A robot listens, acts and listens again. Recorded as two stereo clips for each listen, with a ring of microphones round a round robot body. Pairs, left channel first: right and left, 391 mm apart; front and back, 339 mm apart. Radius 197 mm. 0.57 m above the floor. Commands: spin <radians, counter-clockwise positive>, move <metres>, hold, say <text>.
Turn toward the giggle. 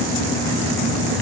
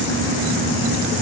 hold
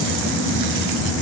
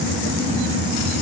hold
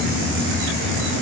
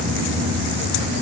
say I can't make out a giggle to turn to.